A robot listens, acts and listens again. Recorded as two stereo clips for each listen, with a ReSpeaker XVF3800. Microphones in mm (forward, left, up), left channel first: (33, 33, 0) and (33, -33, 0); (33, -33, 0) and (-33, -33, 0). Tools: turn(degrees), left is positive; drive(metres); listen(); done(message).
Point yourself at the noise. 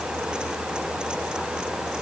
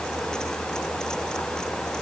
listen()
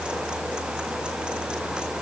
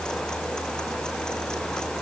listen()
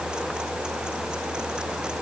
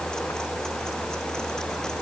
done("I can't make out anything to turn to.")